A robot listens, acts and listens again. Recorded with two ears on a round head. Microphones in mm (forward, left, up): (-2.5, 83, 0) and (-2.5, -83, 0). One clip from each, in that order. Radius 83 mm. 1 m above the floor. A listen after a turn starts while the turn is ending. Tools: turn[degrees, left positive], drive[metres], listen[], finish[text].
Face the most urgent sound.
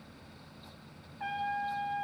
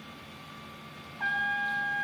Action: listen[]
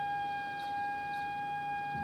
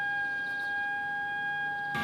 Action: listen[]
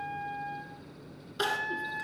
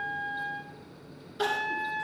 Thought: The crying: about 35° left or 145° left.
Action: turn[35]
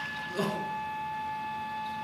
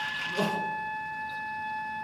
Action: listen[]
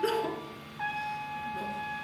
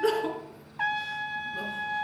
Action: finish[Facing the crying, 1 to 2 m away.]